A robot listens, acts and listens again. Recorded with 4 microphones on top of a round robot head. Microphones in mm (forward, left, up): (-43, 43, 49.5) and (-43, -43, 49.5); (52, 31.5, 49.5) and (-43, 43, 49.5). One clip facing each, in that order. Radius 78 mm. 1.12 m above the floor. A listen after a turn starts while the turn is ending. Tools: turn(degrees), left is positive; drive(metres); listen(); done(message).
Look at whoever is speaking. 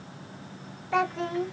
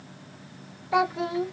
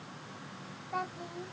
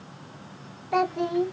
turn(degrees=-175)
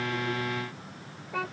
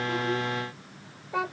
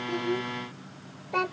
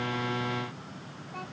turn(degrees=-15)
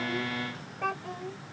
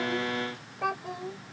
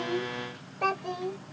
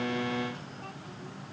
turn(degrees=-10)
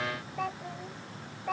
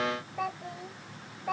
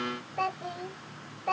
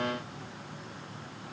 done("Facing the child speaking.")